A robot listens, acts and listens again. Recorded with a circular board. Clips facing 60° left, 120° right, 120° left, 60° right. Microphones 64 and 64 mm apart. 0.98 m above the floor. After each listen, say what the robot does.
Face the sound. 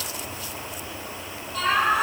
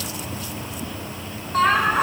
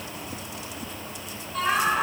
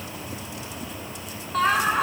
Turn 85° right.
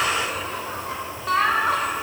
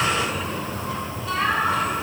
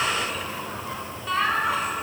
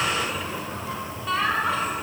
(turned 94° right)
Turn 35° left.
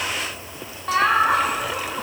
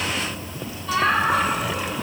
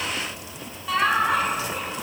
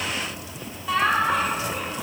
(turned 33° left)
Turn 30° left.
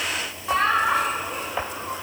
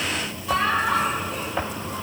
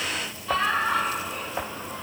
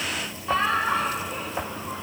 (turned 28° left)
Found it: laughter, straight ahead.